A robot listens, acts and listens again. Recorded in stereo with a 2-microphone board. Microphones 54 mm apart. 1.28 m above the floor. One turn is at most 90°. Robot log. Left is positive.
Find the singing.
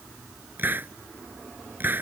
cmd idle
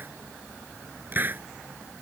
cmd idle
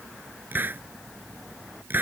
end: I can't make out singing to turn to.